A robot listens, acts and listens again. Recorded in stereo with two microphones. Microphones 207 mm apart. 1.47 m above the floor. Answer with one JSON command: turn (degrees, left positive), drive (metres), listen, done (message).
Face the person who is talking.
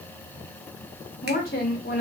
{"turn": 50}
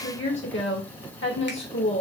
{"turn": 75}
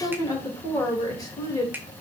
{"turn": 20}
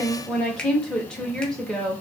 {"done": "Facing the woman speaking, 1 to 2 m away."}